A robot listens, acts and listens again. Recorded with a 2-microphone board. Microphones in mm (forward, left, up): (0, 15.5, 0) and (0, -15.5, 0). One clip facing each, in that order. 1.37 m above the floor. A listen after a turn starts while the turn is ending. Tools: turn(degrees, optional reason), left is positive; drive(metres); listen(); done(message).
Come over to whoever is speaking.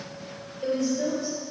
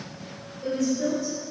turn(degrees=55, reason="The woman speaking: about 55° left or 125° left.")
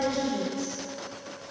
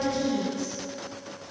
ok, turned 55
turn(degrees=70, reason="So it is at 70° left.")
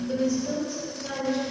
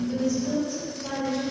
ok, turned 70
turn(degrees=10, reason="The woman speaking is now 10° left.")
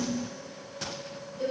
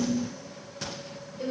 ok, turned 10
drive(metres=1.0)
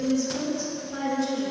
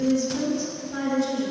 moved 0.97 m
drive(metres=1.0)
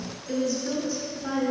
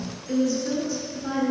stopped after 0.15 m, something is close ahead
done("I am next to the woman speaking.")